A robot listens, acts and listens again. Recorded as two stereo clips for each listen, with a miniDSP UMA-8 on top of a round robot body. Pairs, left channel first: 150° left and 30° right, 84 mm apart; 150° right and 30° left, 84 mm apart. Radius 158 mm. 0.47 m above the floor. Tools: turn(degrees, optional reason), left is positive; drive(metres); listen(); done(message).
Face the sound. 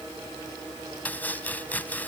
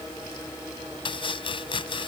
turn(degrees=-140, reason="The chopping: 140° right.")
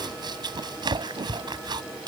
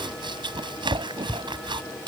done("Facing the chopping.")